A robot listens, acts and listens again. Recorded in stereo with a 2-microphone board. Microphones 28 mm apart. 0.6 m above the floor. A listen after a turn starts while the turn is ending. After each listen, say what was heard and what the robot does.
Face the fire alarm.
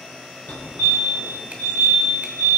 The fire alarm: about 60° left or 120° left. Turn 60° left.
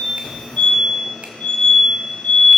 So it is at 45° left. Turn 45° left.
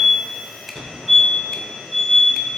The fire alarm is now 15° right. Turn 15° right.
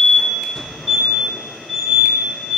Facing the fire alarm.